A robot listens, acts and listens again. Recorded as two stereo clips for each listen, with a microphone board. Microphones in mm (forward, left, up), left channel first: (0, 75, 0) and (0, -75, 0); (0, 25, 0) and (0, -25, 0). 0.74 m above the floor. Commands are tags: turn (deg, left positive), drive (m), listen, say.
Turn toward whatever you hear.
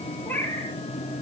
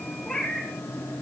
<turn deg="30"/>
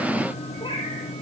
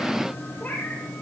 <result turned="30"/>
<turn deg="150"/>
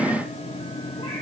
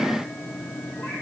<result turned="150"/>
<listen/>
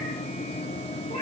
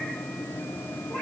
<listen/>
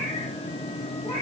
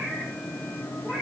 <turn deg="40"/>
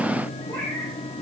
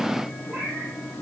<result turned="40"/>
<turn deg="15"/>
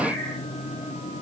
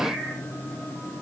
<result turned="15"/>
<listen/>
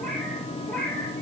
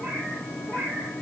<say>Found it: a cat meowing, straight ahead.</say>